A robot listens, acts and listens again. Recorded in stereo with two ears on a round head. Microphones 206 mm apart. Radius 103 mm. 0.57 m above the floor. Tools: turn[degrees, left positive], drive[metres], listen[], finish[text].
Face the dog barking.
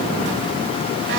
Action: listen[]
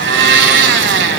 Action: listen[]
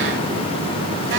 Action: finish[I can't make out a dog barking to turn to.]